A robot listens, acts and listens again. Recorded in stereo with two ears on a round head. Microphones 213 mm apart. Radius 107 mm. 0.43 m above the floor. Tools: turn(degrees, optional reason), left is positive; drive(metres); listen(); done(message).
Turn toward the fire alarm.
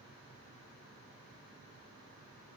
listen()
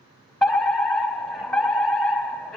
turn(degrees=30)
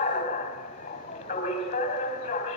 turn(degrees=145, reason="So it is at 145° left.")
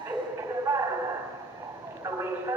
turn(degrees=-10, reason="The fire alarm is now 10° right.")
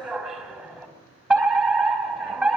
done("Facing the fire alarm.")